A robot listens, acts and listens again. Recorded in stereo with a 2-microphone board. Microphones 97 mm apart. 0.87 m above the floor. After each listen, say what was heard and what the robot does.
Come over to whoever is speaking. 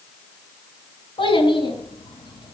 The child speaking: about 55° left or 125° left. Turn 55° left.
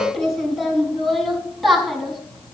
Drive 1.0 m forward.
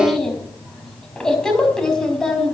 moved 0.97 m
Drive 1.0 m forward.
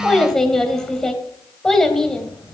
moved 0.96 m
Drive 1.0 m forward.
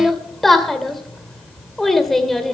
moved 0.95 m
Drive 1.0 m forward.
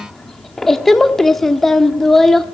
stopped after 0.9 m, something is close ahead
I am next to the child speaking.